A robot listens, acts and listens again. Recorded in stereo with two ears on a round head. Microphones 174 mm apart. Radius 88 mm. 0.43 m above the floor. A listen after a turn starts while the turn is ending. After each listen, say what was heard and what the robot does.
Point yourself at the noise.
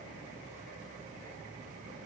Keep listening.
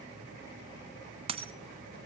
The dropped coin: about 30° right or 150° right. Turn 30° right.
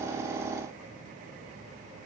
Keep listening.
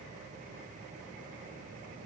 I heard a dropped coin, but can't make it out now. It was about straight ahead or 120° right.